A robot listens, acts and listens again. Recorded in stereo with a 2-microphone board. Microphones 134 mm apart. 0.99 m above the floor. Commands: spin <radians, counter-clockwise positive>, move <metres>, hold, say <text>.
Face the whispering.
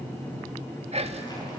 spin -0.87
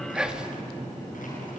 say Found it: whispering, straight ahead.